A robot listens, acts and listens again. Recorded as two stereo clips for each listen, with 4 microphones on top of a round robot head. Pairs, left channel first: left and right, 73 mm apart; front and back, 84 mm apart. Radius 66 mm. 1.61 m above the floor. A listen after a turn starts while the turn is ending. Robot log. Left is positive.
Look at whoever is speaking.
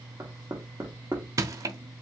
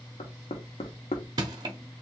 cmd idle
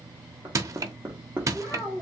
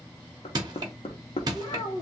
note: The child speaking: 15° left.
cmd yaw +15
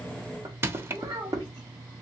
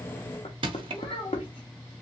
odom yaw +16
note: The child speaking is now 30° right.
cmd yaw -30
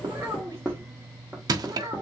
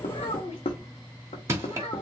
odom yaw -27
note: The child speaking is now 30° right.
cmd yaw -30
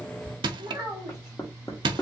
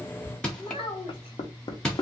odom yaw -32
end: Found it: a child speaking, straight ahead.